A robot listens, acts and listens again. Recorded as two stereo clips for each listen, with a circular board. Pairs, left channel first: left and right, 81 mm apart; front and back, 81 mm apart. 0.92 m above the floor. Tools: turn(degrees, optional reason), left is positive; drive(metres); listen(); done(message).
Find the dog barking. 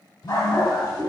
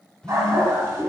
turn(degrees=125, reason="The dog barking: 125° left.")
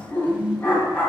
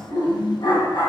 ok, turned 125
turn(degrees=20, reason="The dog barking is now 20° left.")
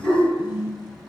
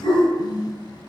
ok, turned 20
done("Facing the dog barking.")